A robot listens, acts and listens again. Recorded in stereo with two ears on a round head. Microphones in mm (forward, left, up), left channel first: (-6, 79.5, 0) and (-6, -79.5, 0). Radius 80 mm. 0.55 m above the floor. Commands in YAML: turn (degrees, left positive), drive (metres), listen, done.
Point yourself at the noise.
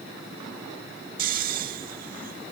turn: -50
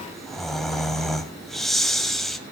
done: "Facing the snoring, 1 to 2 m away."